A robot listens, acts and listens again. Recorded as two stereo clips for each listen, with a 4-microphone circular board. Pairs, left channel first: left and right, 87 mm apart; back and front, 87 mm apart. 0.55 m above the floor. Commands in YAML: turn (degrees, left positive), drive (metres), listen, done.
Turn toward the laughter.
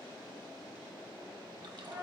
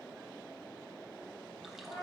listen: true
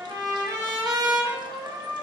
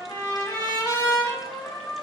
listen: true
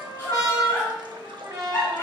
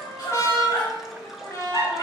turn: 145
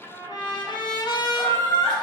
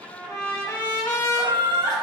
turn: 35
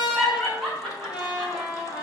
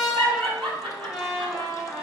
turn: 10
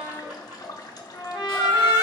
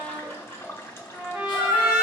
done: "Facing the laughter."